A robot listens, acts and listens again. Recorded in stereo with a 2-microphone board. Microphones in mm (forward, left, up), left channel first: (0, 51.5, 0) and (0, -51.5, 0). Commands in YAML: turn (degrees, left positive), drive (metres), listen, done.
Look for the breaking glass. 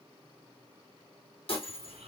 turn: 65
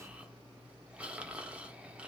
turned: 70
listen: true
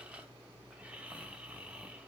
done: "I heard breaking glass, but can't make it out now. It was about 5° right or 45° left."